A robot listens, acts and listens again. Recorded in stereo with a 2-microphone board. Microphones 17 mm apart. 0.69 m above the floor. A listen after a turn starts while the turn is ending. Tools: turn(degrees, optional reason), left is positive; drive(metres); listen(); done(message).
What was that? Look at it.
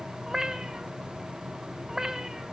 turn(degrees=-35, reason="The cat meowing: about 35° right or 145° right.")
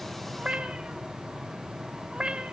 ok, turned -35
turn(degrees=-110, reason="So it is at 110° right.")
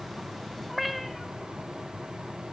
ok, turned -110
done("Facing the cat meowing.")